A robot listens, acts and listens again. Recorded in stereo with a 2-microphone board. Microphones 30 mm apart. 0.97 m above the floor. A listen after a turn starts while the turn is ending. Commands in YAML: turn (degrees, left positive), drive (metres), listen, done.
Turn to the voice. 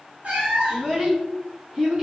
turn: -40
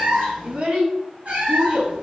turn: -100
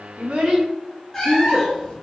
turn: -10
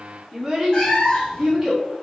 done: "Found it: a child speaking, straight ahead, 1 to 2 m away."